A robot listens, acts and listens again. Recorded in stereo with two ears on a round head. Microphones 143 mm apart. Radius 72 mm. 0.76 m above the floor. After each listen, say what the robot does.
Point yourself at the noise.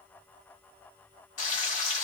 Turn 45° left.
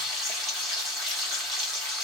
Facing the frying, 1 to 2 m away.